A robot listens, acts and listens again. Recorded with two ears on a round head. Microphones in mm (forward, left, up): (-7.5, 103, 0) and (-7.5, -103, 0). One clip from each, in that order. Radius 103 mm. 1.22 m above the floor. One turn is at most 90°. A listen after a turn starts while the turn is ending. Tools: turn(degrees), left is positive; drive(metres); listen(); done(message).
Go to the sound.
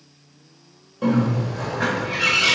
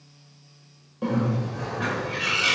turn(degrees=30)
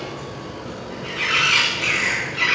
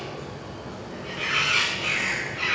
turn(degrees=90)
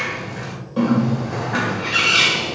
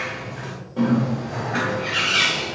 turn(degrees=40)
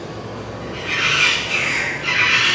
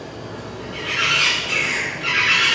turn(degrees=-15)
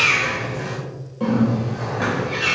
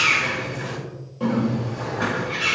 drive(metres=1.0)
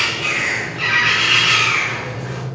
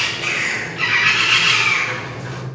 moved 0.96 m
turn(degrees=-15)
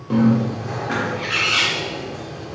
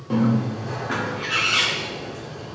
drive(metres=1.0)
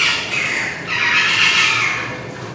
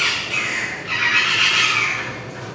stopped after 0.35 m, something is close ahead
done("Arrived at the bird, straight ahead.")